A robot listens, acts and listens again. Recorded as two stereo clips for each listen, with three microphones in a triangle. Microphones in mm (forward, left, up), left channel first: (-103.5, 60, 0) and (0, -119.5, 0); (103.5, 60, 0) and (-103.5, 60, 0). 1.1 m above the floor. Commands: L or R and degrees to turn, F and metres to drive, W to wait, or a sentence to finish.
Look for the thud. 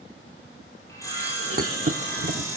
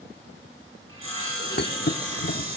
R20
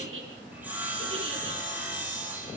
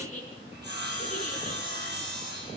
I heard a thud from this way, but can't make it out now.